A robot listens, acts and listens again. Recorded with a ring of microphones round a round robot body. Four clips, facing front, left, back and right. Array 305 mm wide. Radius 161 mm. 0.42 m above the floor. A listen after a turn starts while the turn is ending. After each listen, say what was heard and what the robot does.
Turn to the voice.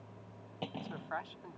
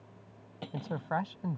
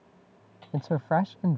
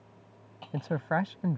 The man speaking: 160° right. Turn 160° right.
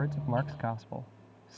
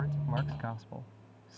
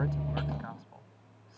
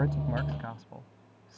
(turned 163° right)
Found it: a man speaking, straight ahead.